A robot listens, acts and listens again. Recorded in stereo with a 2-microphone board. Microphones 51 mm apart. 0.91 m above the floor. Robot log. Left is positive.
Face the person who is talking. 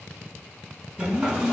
cmd yaw +30
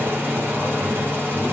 cmd idle
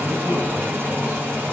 cmd idle
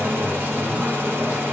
end: I heard a man speaking, but can't make it out now. It was about 15° right or 135° left.